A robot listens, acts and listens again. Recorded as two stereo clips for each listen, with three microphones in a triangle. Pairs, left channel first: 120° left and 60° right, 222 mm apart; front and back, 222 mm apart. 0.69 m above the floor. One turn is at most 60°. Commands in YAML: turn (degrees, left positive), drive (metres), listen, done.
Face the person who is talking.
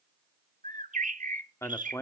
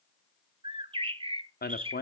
turn: 45
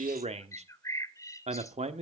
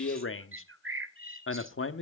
done: "Found it: a man speaking, straight ahead, 1 to 2 m away."